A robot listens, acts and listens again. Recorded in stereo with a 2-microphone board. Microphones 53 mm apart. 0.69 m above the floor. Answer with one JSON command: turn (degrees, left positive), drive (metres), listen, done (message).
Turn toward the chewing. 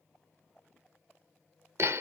{"listen": true}
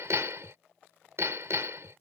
{"listen": true}
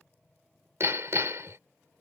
{"done": "I can't make out chewing, only hammering."}